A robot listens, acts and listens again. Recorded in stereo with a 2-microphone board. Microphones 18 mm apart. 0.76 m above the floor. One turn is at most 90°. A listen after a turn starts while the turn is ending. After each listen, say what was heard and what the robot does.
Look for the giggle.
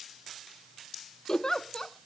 The giggle: about 30° left or 150° left. Turn 30° left.
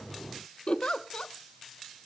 So it is at 110° left. Turn 90° left.
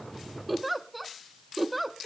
Facing the giggle, 1 to 2 m away.